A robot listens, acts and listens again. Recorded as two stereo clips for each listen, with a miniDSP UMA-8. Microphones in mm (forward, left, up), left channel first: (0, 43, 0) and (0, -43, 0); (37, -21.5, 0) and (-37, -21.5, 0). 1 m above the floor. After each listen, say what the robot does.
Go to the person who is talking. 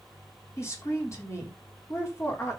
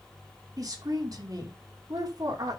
Turn 145° left.
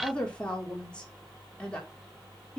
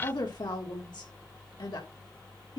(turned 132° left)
Turn 10° left.
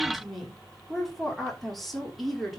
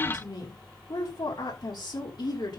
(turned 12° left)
Drive 1.0 m forward.
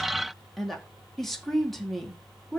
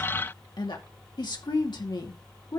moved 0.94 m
Drive 1.0 m forward.
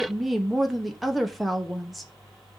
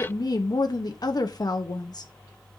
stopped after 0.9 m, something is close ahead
Arrived at the woman speaking, straight ahead.